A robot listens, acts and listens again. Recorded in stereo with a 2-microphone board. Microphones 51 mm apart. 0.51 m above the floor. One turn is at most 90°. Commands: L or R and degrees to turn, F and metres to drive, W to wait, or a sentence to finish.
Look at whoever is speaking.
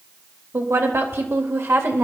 R60
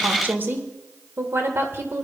R55
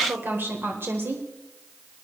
R50
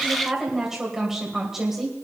Facing the woman speaking, 2 to 4 m away.